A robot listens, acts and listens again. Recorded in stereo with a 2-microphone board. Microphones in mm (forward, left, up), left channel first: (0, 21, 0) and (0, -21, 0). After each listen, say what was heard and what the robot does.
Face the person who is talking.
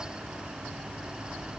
Keep listening.
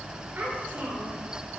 The child speaking: about 45° right or 135° right. Turn 45° right.
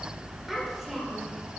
Facing the child speaking.